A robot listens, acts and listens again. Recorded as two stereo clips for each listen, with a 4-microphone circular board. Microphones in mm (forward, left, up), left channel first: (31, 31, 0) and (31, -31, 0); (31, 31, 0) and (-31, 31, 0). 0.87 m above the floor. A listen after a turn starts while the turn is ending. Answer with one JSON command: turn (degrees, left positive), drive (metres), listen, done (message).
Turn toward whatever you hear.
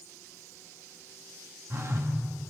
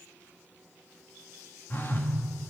{"turn": -50}
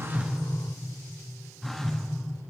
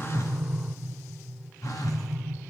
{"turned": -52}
{"done": "Found it: a phone buzzing, straight ahead."}